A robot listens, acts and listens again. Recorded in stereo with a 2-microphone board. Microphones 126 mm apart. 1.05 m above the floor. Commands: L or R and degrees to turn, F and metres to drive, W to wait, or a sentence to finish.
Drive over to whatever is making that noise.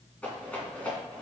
L30
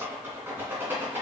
R20
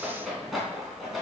F1.0
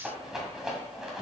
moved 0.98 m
F1.0
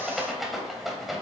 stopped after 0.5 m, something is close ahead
I am next to the rattle.